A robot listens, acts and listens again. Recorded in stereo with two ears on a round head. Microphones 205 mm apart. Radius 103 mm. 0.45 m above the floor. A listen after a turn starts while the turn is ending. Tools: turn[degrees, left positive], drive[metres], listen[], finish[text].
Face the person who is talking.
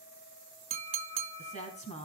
Thought: The woman speaking: about 30° left or 150° left.
Action: turn[30]
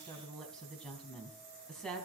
Action: finish[Facing the woman speaking, 2 to 4 m away.]